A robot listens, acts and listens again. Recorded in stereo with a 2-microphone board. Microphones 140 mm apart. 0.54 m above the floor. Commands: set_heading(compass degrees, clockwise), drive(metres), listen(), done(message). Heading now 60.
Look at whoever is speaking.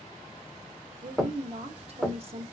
set_heading(105)
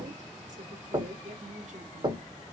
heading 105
listen()
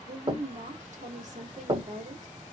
set_heading(185)
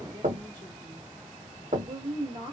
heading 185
set_heading(225)
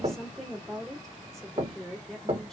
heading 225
done("Facing the woman speaking.")